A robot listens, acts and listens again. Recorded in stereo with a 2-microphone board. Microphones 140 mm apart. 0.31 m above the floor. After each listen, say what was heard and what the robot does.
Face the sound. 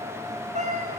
The cat meowing: about 60° right or 120° right. Turn 60° right.
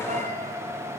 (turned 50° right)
Keep listening.
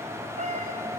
So it is at 55° right. Turn 55° right.
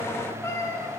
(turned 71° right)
The cat meowing is now 20° left. Turn 20° left.
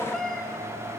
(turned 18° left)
Found it: a cat meowing, straight ahead.